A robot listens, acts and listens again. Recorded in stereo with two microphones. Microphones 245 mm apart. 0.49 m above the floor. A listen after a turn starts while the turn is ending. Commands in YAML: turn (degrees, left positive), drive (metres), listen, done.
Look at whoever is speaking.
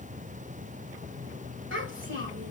turn: -55
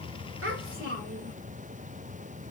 turn: -60
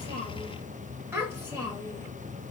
turn: -10
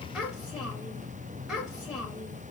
done: "Found it: a child speaking, straight ahead, 1 to 2 m away."